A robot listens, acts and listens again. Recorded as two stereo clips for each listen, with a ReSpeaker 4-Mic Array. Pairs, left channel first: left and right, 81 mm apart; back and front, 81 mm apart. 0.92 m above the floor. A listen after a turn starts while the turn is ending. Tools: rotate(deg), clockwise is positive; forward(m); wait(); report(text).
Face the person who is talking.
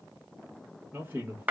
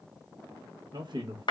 rotate(25)
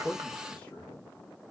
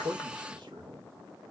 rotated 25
rotate(-20)
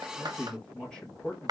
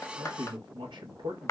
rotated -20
rotate(-10)
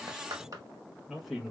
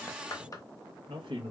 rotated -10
report("Found it: a man speaking, straight ahead.")